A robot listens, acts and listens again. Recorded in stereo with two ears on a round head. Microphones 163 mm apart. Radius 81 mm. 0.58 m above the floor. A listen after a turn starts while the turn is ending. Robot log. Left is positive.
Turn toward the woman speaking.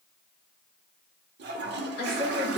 note: The woman speaking: about 60° left or 120° left.
cmd yaw +60
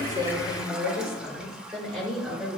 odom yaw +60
end: Facing the woman speaking.